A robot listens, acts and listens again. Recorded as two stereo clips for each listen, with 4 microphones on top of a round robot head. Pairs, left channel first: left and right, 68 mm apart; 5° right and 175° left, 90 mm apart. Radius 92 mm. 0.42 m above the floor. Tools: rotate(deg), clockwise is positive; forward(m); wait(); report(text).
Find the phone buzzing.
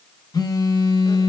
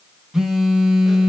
rotate(-90)
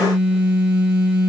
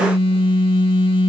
rotate(20)
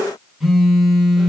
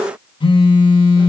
report("Facing the phone buzzing, 1 to 2 m away.")